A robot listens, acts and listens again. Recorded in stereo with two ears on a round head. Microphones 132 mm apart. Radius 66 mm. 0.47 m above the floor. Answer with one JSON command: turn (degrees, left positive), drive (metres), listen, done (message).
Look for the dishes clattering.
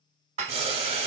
{"turn": -45}
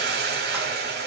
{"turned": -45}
{"listen": true}
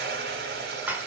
{"turn": -15}
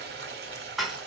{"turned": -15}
{"done": "Found it: dishes clattering, straight ahead."}